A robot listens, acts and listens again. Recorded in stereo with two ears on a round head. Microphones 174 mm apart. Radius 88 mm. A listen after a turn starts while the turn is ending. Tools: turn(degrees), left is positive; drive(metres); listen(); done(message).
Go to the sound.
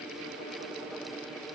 listen()
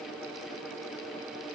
listen()
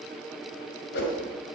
turn(degrees=55)
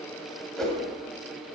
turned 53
drive(metres=1.0)
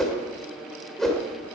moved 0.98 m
drive(metres=1.0)
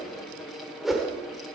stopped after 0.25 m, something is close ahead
done("Arrived at the whoosh, straight ahead.")